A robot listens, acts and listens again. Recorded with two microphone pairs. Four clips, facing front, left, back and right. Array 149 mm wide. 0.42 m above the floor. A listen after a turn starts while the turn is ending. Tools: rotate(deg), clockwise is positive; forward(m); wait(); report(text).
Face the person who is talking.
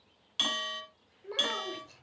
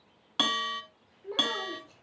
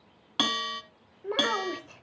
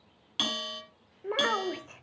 rotate(130)
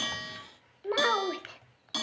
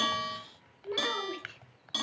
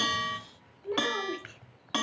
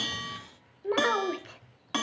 rotate(40)
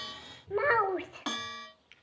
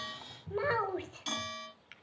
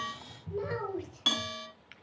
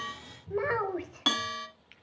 report("Found it: a child speaking, straight ahead, under 1 m away.")